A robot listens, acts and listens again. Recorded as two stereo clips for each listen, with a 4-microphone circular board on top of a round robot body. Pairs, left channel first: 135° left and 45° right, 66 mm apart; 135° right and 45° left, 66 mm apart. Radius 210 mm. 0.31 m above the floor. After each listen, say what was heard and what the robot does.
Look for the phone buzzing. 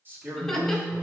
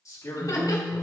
The phone buzzing: 55° right. Turn 55° right.
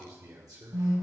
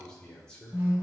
The phone buzzing is now 10° right. Turn 10° right.
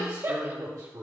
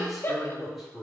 Keep listening.
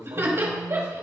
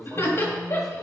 Keep listening.
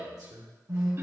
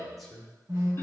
Facing the phone buzzing.